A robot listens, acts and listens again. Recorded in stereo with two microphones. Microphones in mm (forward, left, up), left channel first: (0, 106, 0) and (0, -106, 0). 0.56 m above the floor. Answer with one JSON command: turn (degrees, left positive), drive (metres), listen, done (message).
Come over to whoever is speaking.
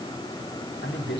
{"turn": 55}
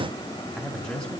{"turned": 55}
{"drive": 1.0}
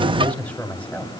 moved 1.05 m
{"drive": 1.0}
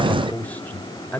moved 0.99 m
{"turn": 10}
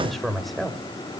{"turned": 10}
{"drive": 1.0}
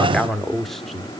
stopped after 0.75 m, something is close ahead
{"done": "I am next to the man speaking."}